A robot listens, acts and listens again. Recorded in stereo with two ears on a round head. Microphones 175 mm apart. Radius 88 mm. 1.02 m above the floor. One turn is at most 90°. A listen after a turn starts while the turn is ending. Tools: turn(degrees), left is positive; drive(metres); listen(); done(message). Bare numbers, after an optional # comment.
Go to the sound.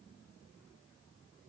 listen()
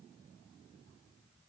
listen()
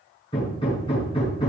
# The hammering: about 25° left or 155° left.
turn(25)
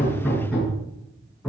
drive(1.0)
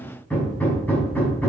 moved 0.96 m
drive(1.0)
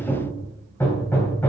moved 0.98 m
# The hammering is now 10° left.
turn(10)
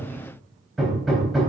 drive(1.0)
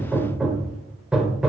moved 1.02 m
drive(1.0)
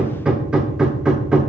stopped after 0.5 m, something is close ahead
done("Arrived at the hammering, straight ahead.")